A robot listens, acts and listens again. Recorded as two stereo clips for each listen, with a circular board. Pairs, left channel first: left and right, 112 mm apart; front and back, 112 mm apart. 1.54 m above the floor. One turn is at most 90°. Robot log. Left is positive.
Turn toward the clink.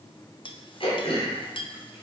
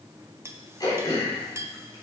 note: The clink: 120° left.
cmd yaw +90
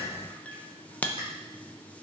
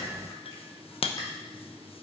note: The clink is now 15° left.
cmd yaw +15
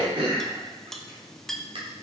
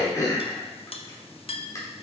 end: Found it: a clink, straight ahead, under 1 m away.